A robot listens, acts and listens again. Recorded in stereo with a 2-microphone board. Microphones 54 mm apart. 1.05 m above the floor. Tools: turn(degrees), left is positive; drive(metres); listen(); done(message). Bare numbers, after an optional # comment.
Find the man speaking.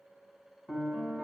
listen()
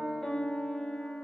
listen()
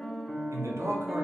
# The man speaking: about 60° right or 120° right.
turn(-60)
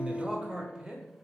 # So it is at 20° right.
turn(-20)
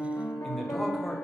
done("Found it: a man speaking, straight ahead, under 1 m away.")